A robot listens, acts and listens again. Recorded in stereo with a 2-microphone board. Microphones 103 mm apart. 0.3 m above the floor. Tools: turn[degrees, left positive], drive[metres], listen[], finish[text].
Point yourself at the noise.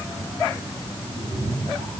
Action: turn[-90]
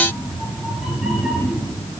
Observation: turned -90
Action: finish[Facing the cat meowing.]